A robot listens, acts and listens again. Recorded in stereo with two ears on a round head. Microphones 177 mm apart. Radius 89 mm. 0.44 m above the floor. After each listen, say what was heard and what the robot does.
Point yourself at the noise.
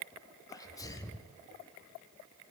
The sneeze: about 15° left or 165° left. Turn 15° left.
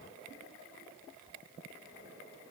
Keep listening.
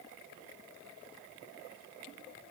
I heard a sneeze, but can't make it out now. It was about straight ahead or 150° left.